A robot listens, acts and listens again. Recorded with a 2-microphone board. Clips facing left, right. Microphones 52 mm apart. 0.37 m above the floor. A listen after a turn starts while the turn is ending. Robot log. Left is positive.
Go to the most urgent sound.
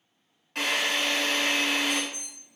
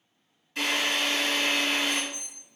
note: The alarm: about 25° left or 155° left.
cmd yaw +25
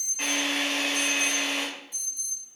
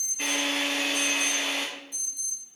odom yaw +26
note: So it is at 10° left.
cmd yaw +10
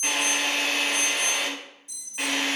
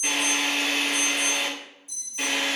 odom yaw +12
cmd fwd 1.0
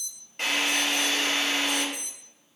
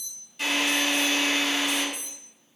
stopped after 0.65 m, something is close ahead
note: The alarm is now 10° right.
cmd yaw -10
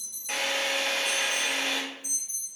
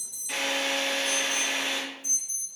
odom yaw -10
end: I am next to the alarm.